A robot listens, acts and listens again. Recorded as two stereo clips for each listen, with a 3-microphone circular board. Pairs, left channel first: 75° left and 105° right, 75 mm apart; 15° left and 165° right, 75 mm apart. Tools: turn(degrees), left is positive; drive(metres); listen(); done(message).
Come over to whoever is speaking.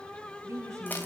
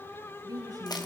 turn(degrees=-150)
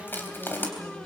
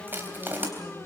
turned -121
turn(degrees=-25)
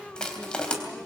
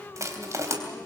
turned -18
turn(degrees=-10)
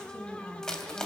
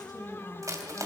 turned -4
drive(metres=1.0)
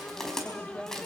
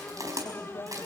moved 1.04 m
drive(metres=1.0)
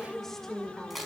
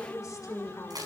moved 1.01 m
turn(degrees=-10)
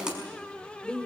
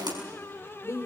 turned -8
drive(metres=1.0)
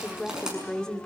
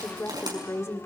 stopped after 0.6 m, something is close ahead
done("Arrived at the woman speaking, straight ahead.")